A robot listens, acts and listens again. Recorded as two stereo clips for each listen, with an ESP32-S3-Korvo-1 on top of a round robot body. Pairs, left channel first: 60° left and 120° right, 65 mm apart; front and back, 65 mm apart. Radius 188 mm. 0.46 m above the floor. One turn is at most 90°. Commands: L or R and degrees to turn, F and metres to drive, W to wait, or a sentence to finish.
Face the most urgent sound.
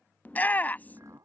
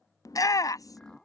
Facing the shout.